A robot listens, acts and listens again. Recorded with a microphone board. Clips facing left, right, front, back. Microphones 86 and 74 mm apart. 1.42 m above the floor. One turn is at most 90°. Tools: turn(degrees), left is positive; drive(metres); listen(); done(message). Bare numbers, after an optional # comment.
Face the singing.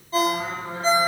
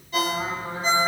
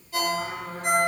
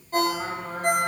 # The singing: 150° right.
turn(-90)
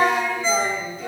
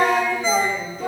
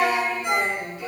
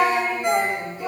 # The singing is now 125° right.
turn(-90)
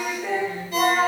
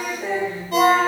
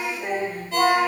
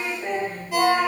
# The singing is now 80° right.
turn(-80)
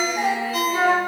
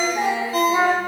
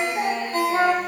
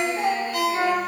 # The singing is now 40° right.
turn(-40)
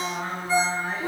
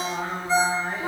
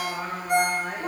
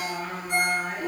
# The singing is now 20° right.
turn(-20)
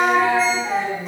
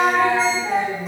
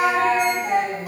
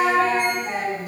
done("Found it: singing, straight ahead, 2 to 4 m away.")